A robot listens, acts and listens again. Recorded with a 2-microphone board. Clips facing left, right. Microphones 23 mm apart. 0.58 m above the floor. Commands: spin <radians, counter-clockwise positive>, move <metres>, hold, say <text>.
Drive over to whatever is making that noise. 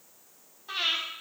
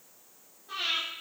spin 1.13
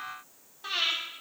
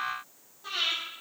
spin 0.79
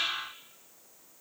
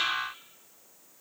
hold
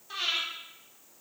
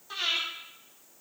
move 1.0
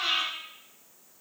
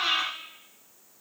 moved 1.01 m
spin -0.17
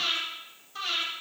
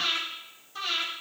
move 1.0
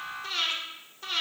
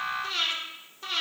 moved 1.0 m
move 1.0
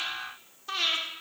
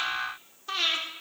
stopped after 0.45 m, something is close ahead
say Arrived at the breathing, straight ahead.